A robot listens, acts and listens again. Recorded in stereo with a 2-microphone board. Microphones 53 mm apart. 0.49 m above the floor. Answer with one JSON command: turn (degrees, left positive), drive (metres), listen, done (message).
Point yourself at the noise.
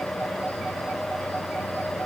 {"listen": true}
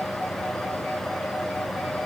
{"listen": true}
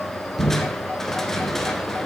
{"turn": 30}
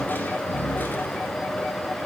{"turn": 140}
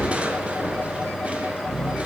{"turn": -25}
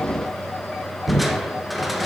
{"done": "Found it: crushing, straight ahead, 1 to 2 m away."}